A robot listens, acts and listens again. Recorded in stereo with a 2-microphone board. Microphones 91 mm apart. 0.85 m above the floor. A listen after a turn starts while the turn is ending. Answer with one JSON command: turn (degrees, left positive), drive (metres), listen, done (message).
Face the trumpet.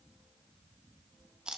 {"listen": true}
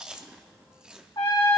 {"turn": 55}
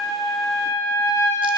{"turn": 70}
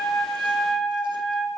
{"done": "Found it: a trumpet, straight ahead, 2 to 4 m away."}